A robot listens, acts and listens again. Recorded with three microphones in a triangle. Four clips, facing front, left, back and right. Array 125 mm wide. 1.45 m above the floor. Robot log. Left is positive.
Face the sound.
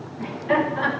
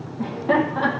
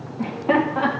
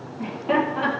note: The laughter: 165° left.
cmd yaw +165
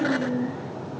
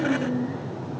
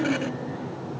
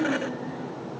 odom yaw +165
note: The laughter is now 20° left.
cmd yaw +20
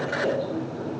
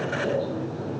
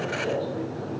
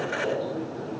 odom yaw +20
end: Found it: laughter, straight ahead.